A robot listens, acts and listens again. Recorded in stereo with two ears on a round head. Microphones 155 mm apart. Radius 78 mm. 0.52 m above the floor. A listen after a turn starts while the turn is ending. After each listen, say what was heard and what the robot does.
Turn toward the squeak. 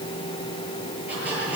Turn 30° right.
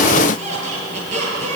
So it is at 140° right. Turn 140° right.
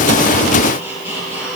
The squeak is now 15° right. Turn 15° right.
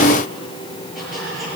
Facing the squeak.